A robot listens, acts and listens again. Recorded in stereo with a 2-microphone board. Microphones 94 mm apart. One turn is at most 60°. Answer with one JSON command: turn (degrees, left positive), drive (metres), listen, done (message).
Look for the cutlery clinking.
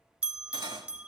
{"turn": -55}
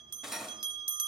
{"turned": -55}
{"done": "Found it: cutlery clinking, straight ahead."}